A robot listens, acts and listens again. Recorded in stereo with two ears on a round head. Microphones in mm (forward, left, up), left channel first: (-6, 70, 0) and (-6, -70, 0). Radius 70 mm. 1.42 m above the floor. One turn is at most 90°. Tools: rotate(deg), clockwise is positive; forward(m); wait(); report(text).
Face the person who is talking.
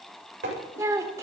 rotate(20)
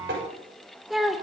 report("Found it: a child speaking, straight ahead, 2 to 4 m away.")